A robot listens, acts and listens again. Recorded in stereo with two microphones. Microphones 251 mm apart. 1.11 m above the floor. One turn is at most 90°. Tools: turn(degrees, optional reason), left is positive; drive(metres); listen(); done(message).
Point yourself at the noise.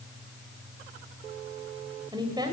turn(degrees=-15, reason="The woman speaking: about 15° right or 165° right.")
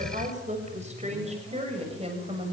turn(degrees=-25, reason="The woman speaking: about 25° right or 155° right.")
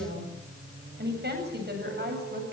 turn(degrees=-90, reason="So it is at 140° right.")
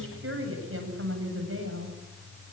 turn(degrees=-55, reason="The woman speaking is now 55° right.")
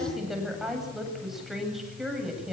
done("Facing the woman speaking.")